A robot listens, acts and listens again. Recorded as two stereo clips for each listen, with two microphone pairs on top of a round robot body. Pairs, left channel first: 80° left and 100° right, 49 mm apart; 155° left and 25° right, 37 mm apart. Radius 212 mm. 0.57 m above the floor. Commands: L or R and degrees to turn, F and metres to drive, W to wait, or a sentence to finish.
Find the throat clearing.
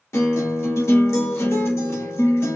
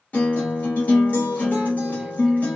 W
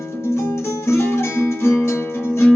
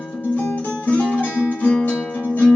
W
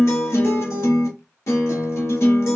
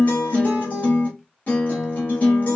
I can't make out throat clearing to turn to.